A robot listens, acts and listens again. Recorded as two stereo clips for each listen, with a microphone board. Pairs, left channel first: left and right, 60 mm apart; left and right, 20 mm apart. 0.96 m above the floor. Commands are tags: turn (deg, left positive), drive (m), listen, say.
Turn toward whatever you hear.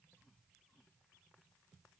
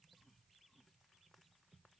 <listen/>
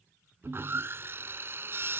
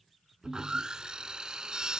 <turn deg="-40"/>
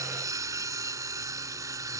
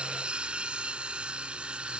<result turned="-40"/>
<turn deg="-95"/>
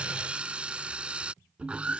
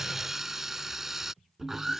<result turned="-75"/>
<turn deg="-20"/>
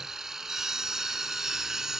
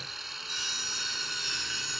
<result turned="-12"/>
<turn deg="-10"/>
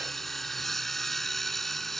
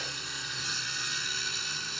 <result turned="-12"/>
<say>Facing the sawing.</say>